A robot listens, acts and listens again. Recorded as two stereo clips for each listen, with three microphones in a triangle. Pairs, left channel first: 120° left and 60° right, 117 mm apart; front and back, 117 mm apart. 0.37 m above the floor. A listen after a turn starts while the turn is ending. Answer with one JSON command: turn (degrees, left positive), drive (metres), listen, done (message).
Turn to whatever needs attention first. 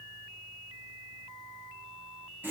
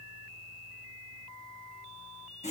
{"listen": true}
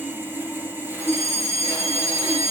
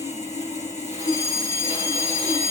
{"turn": -60}
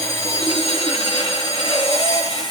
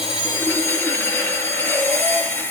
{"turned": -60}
{"listen": true}
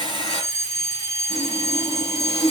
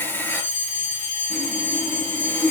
{"done": "Facing the fire alarm."}